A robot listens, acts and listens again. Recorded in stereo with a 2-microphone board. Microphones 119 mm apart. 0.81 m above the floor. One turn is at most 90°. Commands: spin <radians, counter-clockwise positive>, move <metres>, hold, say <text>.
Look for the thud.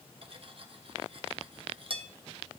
hold
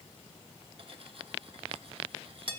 hold
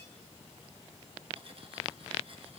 say I can't make out a thud to turn to.